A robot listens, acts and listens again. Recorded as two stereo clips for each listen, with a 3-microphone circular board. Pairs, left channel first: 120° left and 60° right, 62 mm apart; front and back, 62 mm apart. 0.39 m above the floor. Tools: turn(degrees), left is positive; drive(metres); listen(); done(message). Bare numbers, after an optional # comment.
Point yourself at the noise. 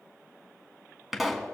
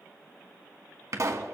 # The pop: 145° right.
turn(-145)
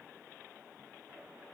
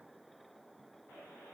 done("Facing where the pop came from. I can't hear it now.")